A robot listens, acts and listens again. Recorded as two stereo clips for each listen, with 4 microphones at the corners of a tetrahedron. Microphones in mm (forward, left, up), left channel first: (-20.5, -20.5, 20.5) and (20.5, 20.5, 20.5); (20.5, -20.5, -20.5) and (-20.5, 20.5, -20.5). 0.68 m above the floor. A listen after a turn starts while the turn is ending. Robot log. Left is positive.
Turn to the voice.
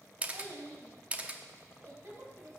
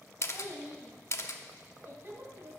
note: The child speaking: 90° left.
cmd yaw +90
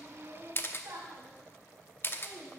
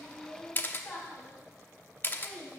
note: The child speaking is now 30° left.
cmd yaw +30
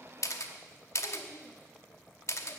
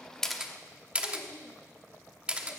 cmd idle
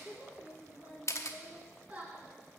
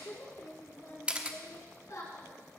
note: The child speaking is now 20° right.
cmd yaw -20
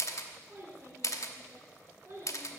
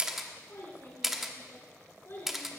end: Found it: a child speaking, straight ahead, over 4 m away.